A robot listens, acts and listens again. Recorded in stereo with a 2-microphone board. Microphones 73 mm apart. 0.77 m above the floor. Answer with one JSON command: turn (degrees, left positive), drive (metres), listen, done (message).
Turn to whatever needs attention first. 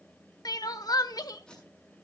{"turn": 60}
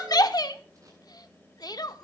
{"turn": 60}
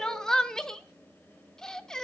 {"turn": 10}
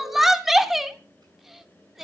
{"done": "Found it: crying, straight ahead."}